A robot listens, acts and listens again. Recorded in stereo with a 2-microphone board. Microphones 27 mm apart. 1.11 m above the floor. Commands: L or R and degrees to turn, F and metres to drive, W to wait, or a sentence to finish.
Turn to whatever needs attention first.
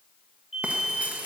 R20
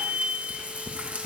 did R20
R140
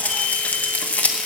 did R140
W
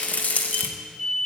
Facing the alarm, over 4 m away.